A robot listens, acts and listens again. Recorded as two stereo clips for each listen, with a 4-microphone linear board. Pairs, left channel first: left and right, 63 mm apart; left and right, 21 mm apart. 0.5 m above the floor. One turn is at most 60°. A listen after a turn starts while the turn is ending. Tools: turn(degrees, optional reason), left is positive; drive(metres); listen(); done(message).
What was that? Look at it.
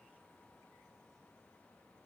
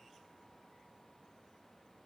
listen()
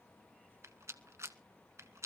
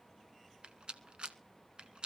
turn(degrees=-50, reason="The rattle: about 50° right or 130° right.")
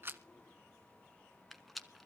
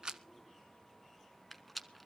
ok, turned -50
done("Found it: a rattle, straight ahead.")